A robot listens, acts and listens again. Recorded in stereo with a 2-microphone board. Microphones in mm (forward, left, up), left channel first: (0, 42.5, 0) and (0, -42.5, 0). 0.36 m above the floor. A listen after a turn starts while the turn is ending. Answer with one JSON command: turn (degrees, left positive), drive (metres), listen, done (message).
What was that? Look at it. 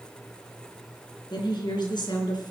{"turn": 70}
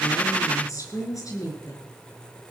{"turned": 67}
{"turn": 50}
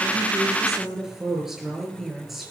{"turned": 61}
{"done": "Found it: a woman speaking, straight ahead, over 4 m away."}